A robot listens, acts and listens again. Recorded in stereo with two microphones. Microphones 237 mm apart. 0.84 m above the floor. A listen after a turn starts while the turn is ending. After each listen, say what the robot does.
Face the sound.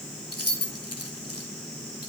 Turn 90° left.
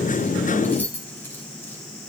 Turn 10° left.
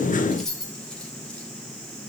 Facing the keys jangling.